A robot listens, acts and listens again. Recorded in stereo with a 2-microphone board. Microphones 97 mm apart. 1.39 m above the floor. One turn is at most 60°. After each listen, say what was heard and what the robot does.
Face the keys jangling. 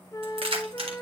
The keys jangling: about 70° right or 110° right. Turn 60° right.
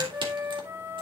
Keep listening.
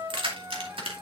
So it is at 70° right. Turn 60° right.
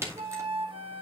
The keys jangling is now 30° right. Turn 30° right.
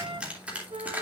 The keys jangling is now 15° right. Turn 15° right.
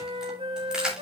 The keys jangling is now 10° right. Turn 10° right.
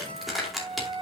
Found it: keys jangling, straight ahead, 2 to 4 m away.